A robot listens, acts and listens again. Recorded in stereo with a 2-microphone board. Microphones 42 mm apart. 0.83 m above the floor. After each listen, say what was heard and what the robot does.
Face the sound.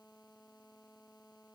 Keep listening.
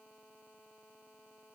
Keep listening.
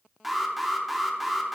Turn 30° right.
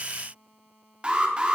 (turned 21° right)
So it is at 155° right. Turn 155° right.
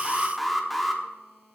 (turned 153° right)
Found it: an alarm, straight ahead, 1 to 2 m away.